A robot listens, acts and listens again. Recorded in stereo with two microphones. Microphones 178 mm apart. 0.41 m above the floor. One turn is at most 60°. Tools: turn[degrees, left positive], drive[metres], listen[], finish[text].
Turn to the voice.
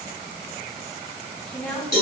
Action: turn[30]
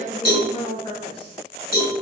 Thought: So it is at 145° left.
Action: turn[60]
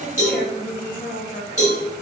Thought: The woman speaking is now 115° left.
Action: turn[60]
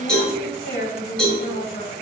Thought: The woman speaking is now 70° left.
Action: turn[60]
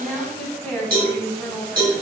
Action: finish[Found it: a woman speaking, straight ahead.]